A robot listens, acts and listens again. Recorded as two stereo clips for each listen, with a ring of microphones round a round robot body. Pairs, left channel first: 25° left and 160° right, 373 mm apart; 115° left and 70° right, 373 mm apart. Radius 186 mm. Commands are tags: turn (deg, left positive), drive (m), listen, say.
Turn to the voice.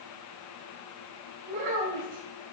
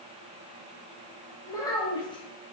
<turn deg="-170"/>
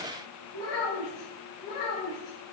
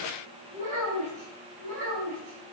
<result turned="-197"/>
<say>Facing the child speaking.</say>